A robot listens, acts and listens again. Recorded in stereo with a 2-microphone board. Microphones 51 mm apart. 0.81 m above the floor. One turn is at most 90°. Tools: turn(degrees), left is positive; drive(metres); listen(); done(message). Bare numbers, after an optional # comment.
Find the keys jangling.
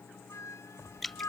# The keys jangling: about 50° left or 130° left.
turn(50)
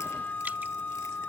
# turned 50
listen()
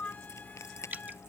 # So it is at 75° left.
turn(75)
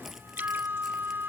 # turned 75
listen()
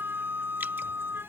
listen()
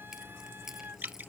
# The keys jangling is now 10° right.
turn(-10)
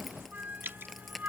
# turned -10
done("Found it: keys jangling, straight ahead.")